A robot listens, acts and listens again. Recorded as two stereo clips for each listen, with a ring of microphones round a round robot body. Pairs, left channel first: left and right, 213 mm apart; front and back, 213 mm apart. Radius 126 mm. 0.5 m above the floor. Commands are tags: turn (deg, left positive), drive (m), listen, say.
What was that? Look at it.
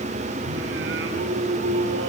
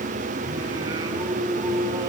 <turn deg="-105"/>
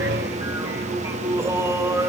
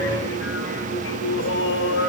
<turn deg="-15"/>
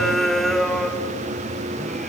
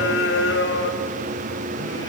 <say>Facing the singing.</say>